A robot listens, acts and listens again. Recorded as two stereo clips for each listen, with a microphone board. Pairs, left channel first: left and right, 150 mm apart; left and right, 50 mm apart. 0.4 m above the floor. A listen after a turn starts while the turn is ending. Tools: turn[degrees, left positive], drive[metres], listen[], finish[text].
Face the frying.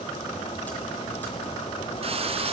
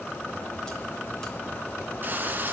Thought: The frying: about 40° right or 140° right.
Action: turn[-40]
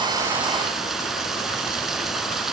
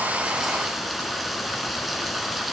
Action: finish[Found it: frying, straight ahead.]